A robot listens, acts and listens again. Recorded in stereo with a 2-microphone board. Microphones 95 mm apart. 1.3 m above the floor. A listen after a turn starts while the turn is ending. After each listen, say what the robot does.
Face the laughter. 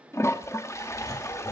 Turn 45° left.
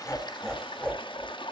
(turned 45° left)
Facing the laughter, over 4 m away.